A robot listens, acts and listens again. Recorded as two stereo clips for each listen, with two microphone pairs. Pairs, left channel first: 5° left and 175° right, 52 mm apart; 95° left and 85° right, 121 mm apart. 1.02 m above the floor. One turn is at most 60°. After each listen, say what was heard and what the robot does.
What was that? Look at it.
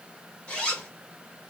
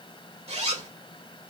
The zipper: 65° right. Turn 60° right.
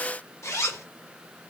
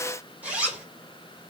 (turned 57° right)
Found it: a zipper, straight ahead, 2 to 4 m away.